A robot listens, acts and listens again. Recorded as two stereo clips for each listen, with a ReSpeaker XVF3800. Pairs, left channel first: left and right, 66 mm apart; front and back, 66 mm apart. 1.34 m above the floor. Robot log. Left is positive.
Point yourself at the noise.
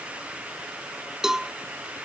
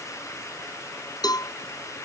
end: Found it: a cowbell, straight ahead.